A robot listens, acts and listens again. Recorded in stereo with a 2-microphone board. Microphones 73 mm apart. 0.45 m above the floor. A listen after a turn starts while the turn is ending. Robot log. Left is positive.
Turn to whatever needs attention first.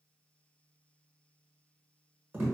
cmd idle
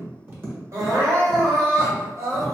note: The crying: about 50° right or 130° right.
cmd yaw -50
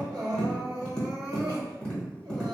note: So it is at 80° right.
cmd yaw -80
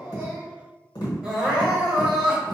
note: The crying is now 10° right.
cmd yaw -10
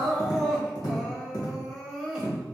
end: Found it: crying, straight ahead, under 1 m away.